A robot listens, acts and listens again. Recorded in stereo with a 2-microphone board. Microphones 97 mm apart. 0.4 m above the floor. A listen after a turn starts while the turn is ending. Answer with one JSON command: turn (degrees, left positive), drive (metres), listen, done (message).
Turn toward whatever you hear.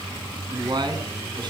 {"turn": -50}
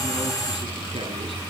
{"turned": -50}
{"listen": true}
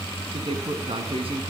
{"turn": -80}
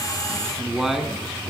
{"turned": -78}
{"done": "Facing the man speaking."}